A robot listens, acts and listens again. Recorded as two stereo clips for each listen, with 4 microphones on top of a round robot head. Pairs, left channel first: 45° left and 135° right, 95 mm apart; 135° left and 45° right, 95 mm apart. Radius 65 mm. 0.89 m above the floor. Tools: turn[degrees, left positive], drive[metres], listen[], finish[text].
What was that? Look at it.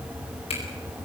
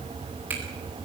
Thought: The finger snap: 30° left.
Action: turn[30]
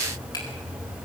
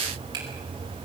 Action: finish[Found it: a finger snap, straight ahead.]